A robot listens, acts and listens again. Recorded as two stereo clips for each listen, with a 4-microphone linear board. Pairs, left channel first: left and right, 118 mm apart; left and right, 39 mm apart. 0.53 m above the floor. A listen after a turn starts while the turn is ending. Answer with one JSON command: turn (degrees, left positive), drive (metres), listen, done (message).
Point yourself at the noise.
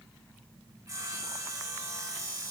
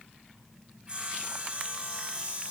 {"turn": -25}
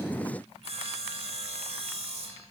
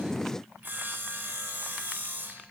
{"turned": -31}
{"turn": -125}
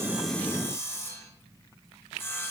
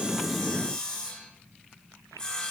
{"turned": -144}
{"turn": 20}
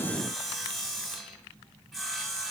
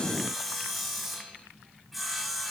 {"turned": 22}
{"done": "Found it: sawing, straight ahead."}